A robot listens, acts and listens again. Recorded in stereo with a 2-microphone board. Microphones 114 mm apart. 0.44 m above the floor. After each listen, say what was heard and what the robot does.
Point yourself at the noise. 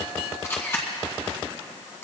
The camera shutter: about 25° left or 155° left. Turn 25° left.
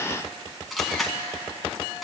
Facing the camera shutter, 2 to 4 m away.